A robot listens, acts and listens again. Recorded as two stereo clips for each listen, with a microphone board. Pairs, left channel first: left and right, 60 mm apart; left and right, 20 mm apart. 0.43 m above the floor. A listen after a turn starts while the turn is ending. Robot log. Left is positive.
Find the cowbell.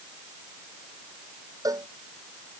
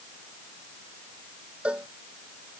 cmd yaw -90
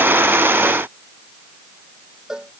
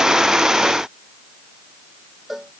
note: So it is at 10° right.
cmd yaw -10
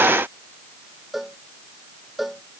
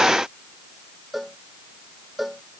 end: Found it: a cowbell, straight ahead.